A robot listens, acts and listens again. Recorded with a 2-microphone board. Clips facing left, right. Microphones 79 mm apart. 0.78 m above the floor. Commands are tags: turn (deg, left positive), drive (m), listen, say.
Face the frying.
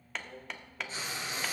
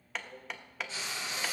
<turn deg="45"/>
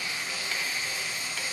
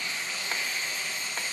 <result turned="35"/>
<turn deg="10"/>
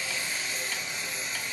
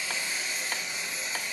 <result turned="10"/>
<say>Facing the frying.</say>